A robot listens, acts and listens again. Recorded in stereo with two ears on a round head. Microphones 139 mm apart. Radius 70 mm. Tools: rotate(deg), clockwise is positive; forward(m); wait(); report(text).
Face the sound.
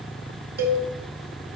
rotate(65)
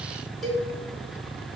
report("Found it: a cowbell, straight ahead.")